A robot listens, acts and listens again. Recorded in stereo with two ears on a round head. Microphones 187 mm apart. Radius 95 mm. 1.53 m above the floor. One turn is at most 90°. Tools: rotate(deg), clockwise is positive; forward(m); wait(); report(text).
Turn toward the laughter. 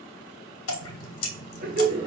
rotate(35)
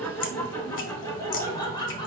rotate(-25)
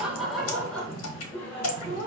rotate(-15)
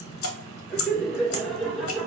report("Found it: laughter, straight ahead, 2 to 4 m away.")